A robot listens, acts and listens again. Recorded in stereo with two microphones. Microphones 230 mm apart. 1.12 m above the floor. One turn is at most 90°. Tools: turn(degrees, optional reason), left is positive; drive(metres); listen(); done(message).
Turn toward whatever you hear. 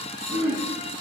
turn(degrees=-70, reason="The throat clearing: about 70° right or 110° right.")
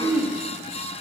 turn(degrees=-10, reason="So it is at 10° right.")
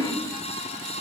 done("Found it: throat clearing, straight ahead, 1 to 2 m away.")